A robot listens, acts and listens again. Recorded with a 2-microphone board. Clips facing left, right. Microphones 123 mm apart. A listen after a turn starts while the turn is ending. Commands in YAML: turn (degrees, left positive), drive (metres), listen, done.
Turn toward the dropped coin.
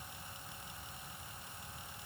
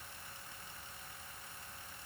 listen: true
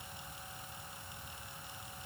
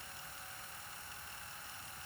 listen: true
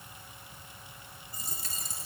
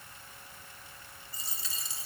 turn: 50
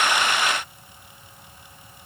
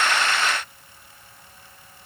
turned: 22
listen: true
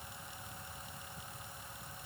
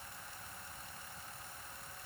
done: "I heard a dropped coin, but can't make it out now. It was about 25° left or 110° left."